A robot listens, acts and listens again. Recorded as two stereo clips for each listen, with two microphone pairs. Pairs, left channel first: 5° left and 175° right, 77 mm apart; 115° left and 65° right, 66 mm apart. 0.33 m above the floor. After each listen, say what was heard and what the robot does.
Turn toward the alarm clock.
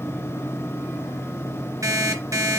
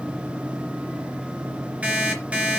The alarm clock: 135° right. Turn 135° right.
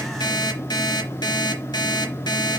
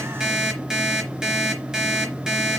The alarm clock is now 10° left. Turn 10° left.
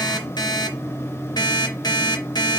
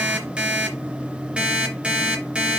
Facing the alarm clock.